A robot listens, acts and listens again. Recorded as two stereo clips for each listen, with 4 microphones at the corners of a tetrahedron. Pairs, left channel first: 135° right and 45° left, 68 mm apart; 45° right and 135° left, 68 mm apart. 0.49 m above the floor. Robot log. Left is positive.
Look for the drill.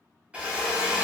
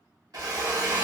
note: The drill: 115° left.
cmd yaw +115
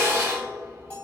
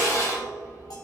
note: The drill is now 10° right.
cmd yaw -10
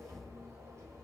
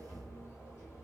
cmd idle
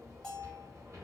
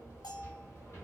cmd idle
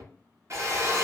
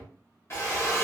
end: Facing the drill.